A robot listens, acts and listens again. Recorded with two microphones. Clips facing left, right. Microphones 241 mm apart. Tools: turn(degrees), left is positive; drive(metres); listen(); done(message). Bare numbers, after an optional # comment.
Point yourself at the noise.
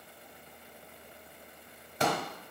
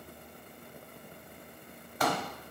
# The pop: about 25° left or 155° left.
turn(25)
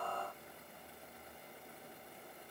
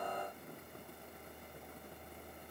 listen()
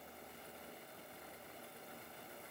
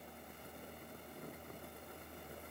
done("I heard a pop, but can't make it out now. It was about straight ahead or 130° left.")